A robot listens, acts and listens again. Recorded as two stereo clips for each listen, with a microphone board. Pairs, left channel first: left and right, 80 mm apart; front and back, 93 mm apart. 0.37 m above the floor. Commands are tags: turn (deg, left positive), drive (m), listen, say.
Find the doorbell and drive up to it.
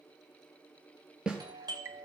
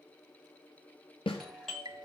<turn deg="-85"/>
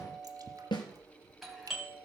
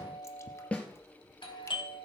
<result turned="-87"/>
<drive m="1.0"/>
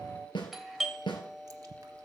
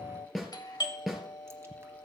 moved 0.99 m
<drive m="1.0"/>
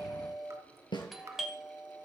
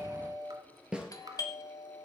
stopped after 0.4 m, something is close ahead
<say>Arrived at the doorbell, straight ahead.</say>